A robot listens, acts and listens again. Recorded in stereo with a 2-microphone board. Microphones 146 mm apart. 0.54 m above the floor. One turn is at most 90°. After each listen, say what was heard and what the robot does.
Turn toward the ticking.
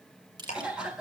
The ticking: about 50° left or 130° left. Turn 50° left.
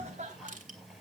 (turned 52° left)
Keep listening.
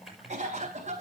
Found it: ticking, straight ahead.